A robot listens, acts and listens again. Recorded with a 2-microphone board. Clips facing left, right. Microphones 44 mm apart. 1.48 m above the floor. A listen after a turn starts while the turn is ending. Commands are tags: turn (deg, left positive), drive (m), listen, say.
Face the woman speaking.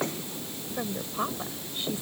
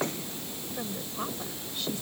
<turn deg="20"/>
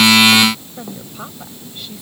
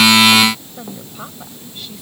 <say>Facing the woman speaking.</say>